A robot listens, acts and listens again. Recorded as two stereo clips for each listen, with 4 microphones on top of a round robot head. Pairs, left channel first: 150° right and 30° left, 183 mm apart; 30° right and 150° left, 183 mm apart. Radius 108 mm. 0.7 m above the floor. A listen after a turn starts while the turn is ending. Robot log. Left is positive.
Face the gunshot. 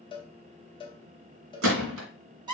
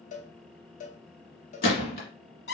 note: The gunshot: 10° left.
cmd yaw +10
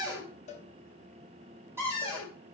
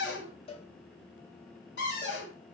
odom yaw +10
end: Facing where the gunshot came from. I can't hear it now.